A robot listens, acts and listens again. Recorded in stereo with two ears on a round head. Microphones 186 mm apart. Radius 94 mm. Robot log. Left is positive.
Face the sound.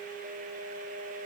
cmd idle
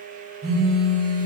note: The phone buzzing: about 45° right or 135° right.
cmd yaw -45
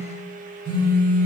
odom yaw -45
note: So it is at 85° right.
cmd yaw -85
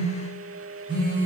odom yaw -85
note: The phone buzzing is now 25° right.
cmd yaw -25
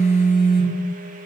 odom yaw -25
end: Facing the phone buzzing, 1 to 2 m away.